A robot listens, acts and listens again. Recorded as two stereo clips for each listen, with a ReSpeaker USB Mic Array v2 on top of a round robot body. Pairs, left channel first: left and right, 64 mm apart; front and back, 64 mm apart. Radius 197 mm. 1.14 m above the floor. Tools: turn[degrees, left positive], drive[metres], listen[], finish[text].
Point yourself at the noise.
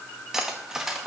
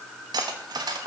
Thought: The cutlery clinking: 175° right.
Action: turn[-175]
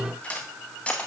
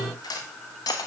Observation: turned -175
Thought: The cutlery clinking is now 15° left.
Action: turn[15]
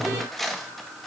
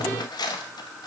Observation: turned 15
Action: finish[Facing the cutlery clinking.]